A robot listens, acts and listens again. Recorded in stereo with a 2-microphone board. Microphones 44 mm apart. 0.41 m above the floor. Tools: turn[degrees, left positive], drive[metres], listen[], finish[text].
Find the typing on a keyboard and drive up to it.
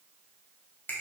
Action: listen[]
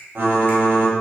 Thought: The typing on a keyboard: about 55° right or 125° right.
Action: turn[-55]
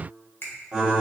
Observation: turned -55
Thought: So it is at 15° right.
Action: turn[-15]
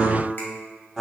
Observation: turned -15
Action: drive[1.0]
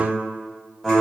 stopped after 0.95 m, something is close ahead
Action: finish[Arrived at the typing on a keyboard, straight ahead.]